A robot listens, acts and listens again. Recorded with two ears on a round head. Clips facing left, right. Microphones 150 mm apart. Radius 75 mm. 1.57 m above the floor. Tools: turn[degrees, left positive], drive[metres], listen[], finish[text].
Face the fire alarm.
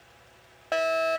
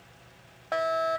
Thought: The fire alarm: about 35° left or 145° left.
Action: turn[35]
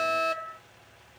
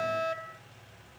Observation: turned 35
Thought: So it is at 115° left.
Action: turn[115]
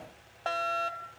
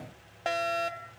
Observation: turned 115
Thought: The fire alarm is now 20° right.
Action: turn[-20]
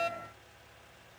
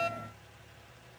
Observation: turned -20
Action: finish[Facing the fire alarm.]